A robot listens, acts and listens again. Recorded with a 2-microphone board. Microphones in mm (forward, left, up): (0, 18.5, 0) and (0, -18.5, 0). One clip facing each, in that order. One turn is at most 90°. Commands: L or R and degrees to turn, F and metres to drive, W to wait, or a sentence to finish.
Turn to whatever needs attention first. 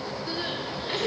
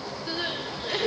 R15
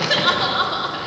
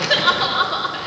Facing the crying, 1 to 2 m away.